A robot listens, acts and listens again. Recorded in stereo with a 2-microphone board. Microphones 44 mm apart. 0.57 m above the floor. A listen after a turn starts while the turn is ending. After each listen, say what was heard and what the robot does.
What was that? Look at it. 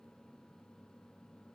Keep listening.
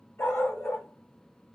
Turn 90° left.
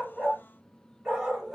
So it is at 15° right. Turn 15° right.
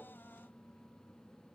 Keep listening.
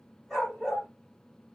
Found it: a dog barking, straight ahead, 1 to 2 m away.